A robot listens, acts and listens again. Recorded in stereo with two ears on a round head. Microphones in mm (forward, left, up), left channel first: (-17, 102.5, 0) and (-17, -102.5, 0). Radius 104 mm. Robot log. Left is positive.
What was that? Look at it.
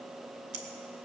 note: The scissors: about 30° right or 150° right.
cmd yaw -30
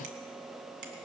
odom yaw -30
cmd idle
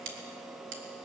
note: So it is at 115° right.
cmd yaw -115
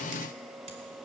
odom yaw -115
cmd idle
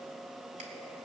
cmd idle
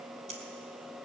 note: The scissors is now 35° right.
cmd yaw -35
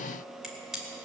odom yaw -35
end: Found it: scissors, straight ahead, 2 to 4 m away.